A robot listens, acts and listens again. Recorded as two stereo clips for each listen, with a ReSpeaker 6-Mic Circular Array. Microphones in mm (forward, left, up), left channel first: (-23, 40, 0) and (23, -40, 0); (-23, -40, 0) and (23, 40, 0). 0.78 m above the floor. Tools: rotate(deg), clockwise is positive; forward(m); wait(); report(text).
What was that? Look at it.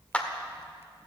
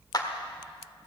rotate(165)
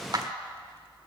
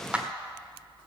rotate(20)
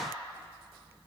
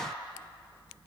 wait()
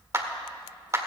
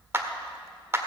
report("Found it: a clap, straight ahead.")